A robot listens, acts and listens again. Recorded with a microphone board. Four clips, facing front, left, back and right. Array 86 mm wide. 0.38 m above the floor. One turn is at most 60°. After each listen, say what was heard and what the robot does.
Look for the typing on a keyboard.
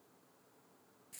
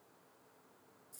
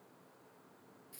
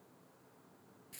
Keep listening.
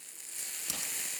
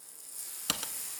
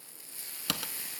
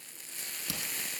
The typing on a keyboard: 140° left. Turn 60° left.
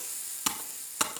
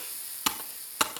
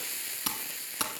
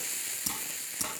The typing on a keyboard is now 75° left. Turn 60° left.
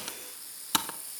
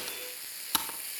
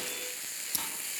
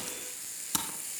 The typing on a keyboard is now 20° left. Turn 20° left.
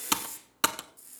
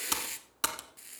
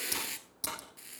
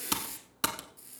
Facing the typing on a keyboard, 1 to 2 m away.